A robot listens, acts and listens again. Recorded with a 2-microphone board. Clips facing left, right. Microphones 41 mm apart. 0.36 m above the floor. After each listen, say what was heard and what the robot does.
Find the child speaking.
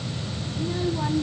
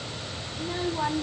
Turn 30° right.
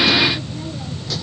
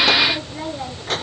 So it is at 140° right. Turn 140° right.
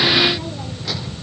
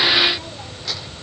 Keep listening.
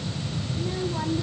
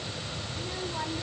Found it: a child speaking, straight ahead.